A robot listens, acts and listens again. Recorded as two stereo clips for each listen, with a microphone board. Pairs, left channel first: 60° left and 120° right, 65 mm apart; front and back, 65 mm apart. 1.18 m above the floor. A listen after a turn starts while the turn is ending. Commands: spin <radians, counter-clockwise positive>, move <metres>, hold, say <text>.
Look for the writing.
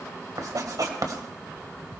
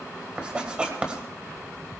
spin -1.92
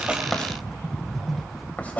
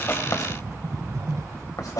say Found it: writing, straight ahead.